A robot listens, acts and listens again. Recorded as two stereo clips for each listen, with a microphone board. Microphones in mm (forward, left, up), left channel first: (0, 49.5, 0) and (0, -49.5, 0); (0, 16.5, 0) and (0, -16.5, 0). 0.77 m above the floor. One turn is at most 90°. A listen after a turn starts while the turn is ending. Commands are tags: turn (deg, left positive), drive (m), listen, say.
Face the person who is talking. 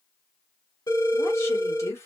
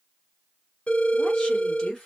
<turn deg="25"/>
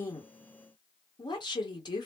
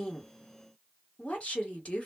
<turn deg="90"/>
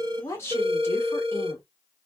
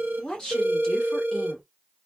<turn deg="35"/>
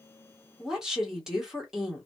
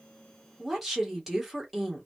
<say>Facing the woman speaking.</say>